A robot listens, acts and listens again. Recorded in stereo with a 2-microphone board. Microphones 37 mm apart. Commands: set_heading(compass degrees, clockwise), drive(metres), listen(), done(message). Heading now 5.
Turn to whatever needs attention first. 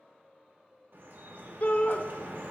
set_heading(320)
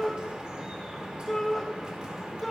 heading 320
done("Found it: a shout, straight ahead, under 1 m away.")